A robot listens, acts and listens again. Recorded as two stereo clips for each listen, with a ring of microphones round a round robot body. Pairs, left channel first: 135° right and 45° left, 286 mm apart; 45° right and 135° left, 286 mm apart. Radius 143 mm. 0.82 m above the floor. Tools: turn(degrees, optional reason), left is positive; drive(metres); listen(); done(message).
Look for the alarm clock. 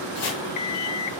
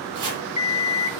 turn(degrees=-110, reason="The alarm clock: 110° right.")
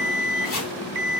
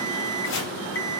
done("Facing the alarm clock, under 1 m away.")